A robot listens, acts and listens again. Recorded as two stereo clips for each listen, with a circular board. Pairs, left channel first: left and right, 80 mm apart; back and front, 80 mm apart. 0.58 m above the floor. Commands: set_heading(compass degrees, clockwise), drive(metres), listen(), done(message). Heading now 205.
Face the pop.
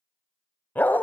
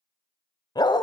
listen()
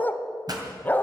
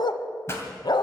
set_heading(330)
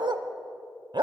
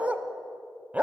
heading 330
done("I heard a pop from this way, but can't make it out now.")